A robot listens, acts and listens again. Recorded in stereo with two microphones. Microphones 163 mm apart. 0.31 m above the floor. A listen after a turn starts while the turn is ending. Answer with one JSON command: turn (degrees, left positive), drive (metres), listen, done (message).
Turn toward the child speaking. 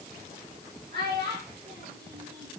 {"turn": -75}
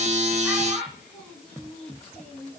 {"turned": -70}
{"done": "Facing the child speaking."}